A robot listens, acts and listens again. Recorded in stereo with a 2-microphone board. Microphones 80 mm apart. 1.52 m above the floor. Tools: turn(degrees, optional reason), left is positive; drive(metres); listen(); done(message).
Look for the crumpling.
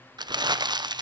turn(degrees=-65, reason="The crumpling: about 65° right or 115° right.")
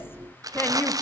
turn(degrees=-50, reason="So it is at 50° right.")
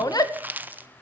turn(degrees=-25, reason="The crumpling is now 25° right.")
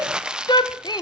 turn(degrees=-10, reason="The crumpling is now 10° right.")
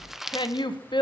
done("Found it: crumpling, straight ahead, under 1 m away.")